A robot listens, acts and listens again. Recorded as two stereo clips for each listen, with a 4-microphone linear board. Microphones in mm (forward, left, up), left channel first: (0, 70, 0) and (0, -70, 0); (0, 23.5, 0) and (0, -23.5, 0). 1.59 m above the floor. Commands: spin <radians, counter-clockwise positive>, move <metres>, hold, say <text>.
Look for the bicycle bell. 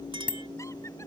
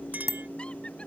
spin -1.57
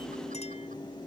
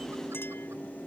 hold
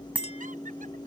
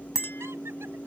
spin -0.17
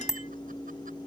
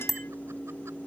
say Found it: a bicycle bell, straight ahead.